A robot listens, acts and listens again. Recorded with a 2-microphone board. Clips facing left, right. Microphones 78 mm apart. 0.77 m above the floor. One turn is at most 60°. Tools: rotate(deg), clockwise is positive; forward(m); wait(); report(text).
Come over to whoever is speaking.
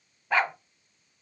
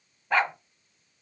wait()
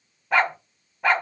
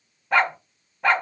wait()
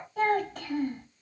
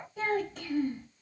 rotate(-60)
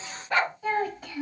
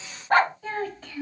rotate(-15)
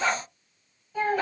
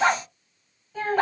forward(1.0)
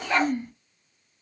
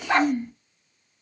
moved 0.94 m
forward(1.0)
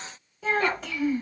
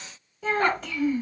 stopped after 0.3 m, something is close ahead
report("I am next to the child speaking.")